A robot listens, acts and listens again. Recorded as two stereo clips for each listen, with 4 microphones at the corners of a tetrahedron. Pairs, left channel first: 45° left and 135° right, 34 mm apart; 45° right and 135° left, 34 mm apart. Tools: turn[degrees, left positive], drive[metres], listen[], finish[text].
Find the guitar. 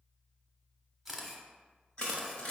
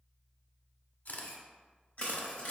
Action: listen[]
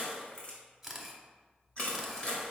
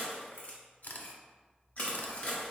Action: listen[]
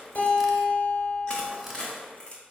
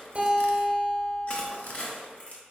Thought: The guitar: 85° left.
Action: turn[85]
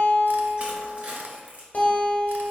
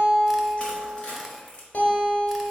Action: finish[Found it: a guitar, straight ahead.]